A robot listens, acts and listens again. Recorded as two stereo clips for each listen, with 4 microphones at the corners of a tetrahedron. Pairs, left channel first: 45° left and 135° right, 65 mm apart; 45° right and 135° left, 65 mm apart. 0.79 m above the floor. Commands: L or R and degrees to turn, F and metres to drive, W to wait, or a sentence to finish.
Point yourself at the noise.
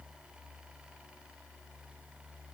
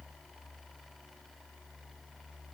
W
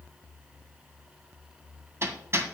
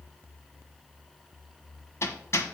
R90
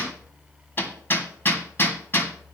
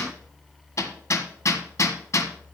R10
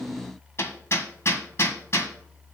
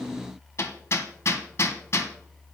Facing the hammering, 1 to 2 m away.